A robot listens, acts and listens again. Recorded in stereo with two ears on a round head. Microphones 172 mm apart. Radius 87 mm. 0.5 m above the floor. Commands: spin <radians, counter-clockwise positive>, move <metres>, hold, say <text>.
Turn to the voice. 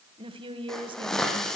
spin -0.52
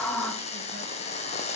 hold
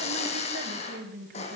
spin -2.09
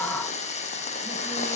hold
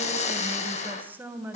spin -0.17
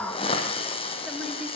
hold
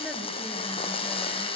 hold
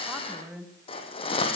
say Facing the woman speaking.